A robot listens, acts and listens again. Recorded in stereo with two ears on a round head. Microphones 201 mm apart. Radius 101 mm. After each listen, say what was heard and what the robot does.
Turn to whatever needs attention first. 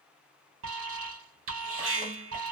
The alarm: about 60° right or 120° right. Turn 60° right.
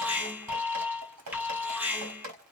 So it is at 10° right. Turn 10° right.
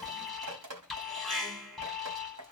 Facing the alarm.